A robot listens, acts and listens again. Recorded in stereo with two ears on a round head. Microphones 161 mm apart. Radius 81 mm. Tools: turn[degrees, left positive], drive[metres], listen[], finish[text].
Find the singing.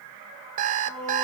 Action: turn[30]
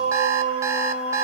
Thought: So it is at 35° right.
Action: turn[-35]
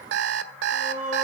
Thought: The singing is now 15° left.
Action: turn[15]
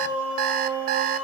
Thought: The singing is now 10° right.
Action: turn[-10]
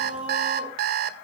Action: finish[Facing the singing, over 4 m away.]